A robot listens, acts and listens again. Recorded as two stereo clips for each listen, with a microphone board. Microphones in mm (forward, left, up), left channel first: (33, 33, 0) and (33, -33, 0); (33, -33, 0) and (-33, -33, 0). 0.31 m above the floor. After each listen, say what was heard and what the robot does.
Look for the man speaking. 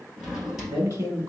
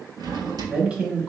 The man speaking: 115° right. Turn 115° right.
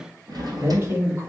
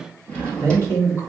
The man speaking is now 50° right. Turn 50° right.
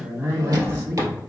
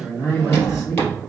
The man speaking is now 40° right. Turn 40° right.
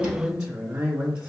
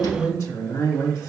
The man speaking is now 15° right. Turn 15° right.
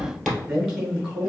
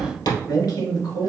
Facing the man speaking, 2 to 4 m away.